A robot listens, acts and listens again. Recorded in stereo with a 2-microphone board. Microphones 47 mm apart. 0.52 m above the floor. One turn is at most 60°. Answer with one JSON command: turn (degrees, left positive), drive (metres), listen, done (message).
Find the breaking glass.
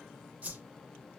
{"listen": true}
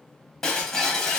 {"turn": 15}
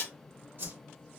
{"turn": 60}
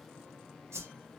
{"turn": 60}
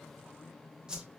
{"turn": 30}
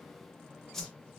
{"done": "Facing where the breaking glass came from. I can't hear it now."}